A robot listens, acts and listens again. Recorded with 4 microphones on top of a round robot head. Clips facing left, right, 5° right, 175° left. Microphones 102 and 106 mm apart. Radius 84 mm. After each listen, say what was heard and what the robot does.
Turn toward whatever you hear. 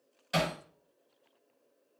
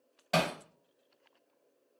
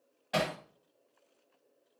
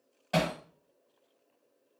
The hammering: 120° right. Turn 120° right.
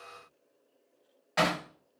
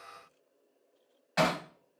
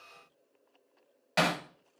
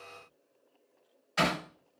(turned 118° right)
Facing the hammering.